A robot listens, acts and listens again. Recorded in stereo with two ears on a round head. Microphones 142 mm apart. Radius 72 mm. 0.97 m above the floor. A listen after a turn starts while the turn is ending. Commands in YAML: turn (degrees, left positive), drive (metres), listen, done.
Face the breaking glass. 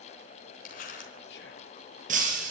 turn: -50
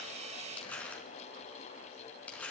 listen: true
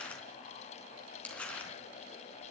done: "I heard breaking glass, but can't make it out now. It was about straight ahead or 80° right."